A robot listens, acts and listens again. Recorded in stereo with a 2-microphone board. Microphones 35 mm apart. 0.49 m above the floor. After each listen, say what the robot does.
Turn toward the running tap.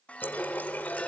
Turn 65° left.
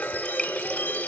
Turn 30° left.
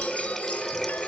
Found it: a running tap, straight ahead.